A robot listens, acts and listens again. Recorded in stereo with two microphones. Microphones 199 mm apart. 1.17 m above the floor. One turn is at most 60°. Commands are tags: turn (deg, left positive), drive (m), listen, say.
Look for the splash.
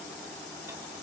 <listen/>
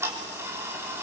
<listen/>
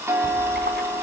<turn deg="-60"/>
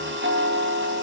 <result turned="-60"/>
<listen/>
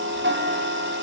<say>I heard a splash, but can't make it out now. It was about straight ahead or 60° right.</say>